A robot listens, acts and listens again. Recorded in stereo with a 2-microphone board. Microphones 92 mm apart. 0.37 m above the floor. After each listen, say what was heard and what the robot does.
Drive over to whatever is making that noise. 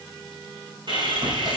The sawing: about 55° right or 125° right. Turn 55° right.
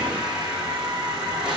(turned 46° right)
So it is at 10° right. Turn 10° right.
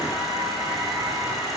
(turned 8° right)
Drive 1.0 m forward.
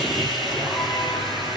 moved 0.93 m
Drive 1.0 m forward.
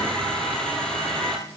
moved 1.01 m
The sawing is now 10° left. Turn 10° left.
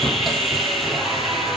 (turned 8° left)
Drive 1.0 m forward.
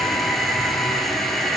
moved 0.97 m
Drive 1.0 m forward.
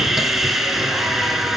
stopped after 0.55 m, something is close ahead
Arrived at the sawing, straight ahead.